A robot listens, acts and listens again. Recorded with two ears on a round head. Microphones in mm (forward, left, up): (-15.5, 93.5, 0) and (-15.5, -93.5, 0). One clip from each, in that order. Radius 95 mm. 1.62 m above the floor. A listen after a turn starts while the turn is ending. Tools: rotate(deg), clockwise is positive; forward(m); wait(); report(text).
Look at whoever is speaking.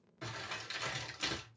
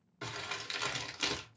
wait()
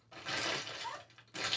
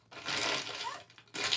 rotate(65)
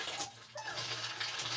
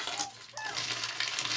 rotate(15)
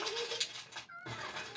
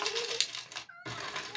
report("Facing the child speaking.")